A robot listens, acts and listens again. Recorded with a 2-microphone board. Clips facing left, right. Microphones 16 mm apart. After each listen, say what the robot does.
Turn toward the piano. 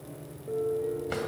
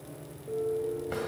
Turn 60° left.
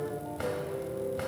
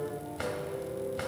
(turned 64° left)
Turn 55° left.
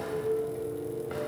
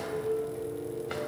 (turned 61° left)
Facing the piano, 1 to 2 m away.